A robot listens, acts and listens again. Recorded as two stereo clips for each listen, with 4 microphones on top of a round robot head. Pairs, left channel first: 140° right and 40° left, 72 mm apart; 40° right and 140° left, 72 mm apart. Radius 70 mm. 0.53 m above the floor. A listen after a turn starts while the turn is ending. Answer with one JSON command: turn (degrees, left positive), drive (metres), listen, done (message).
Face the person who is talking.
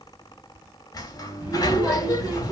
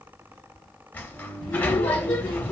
{"turn": -25}
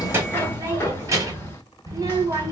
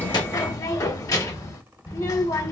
{"done": "Facing the child speaking."}